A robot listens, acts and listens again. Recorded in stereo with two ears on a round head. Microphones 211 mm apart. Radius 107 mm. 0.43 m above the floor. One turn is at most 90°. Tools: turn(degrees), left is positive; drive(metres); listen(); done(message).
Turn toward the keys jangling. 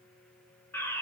listen()
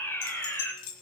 turn(degrees=90)
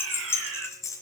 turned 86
turn(degrees=15)
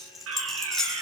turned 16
done("Facing the keys jangling, over 4 m away.")